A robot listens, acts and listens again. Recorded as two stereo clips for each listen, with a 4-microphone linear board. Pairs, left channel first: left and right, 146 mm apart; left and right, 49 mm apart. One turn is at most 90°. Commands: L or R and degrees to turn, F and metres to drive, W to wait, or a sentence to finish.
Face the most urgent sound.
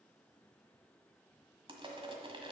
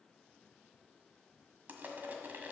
W
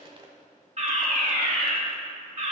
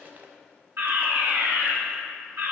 R50
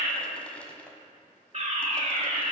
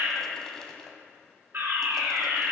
R65
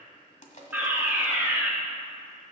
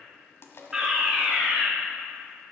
R15
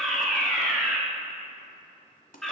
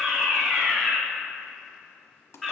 Found it: a fire alarm, straight ahead, 2 to 4 m away.